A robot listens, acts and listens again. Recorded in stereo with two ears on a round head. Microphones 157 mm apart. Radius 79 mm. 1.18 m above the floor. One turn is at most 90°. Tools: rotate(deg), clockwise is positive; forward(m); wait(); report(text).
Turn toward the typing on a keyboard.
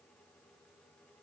wait()
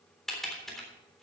rotate(-30)
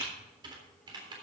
rotate(30)
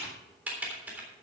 rotate(10)
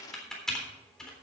report("Found it: typing on a keyboard, straight ahead, 2 to 4 m away.")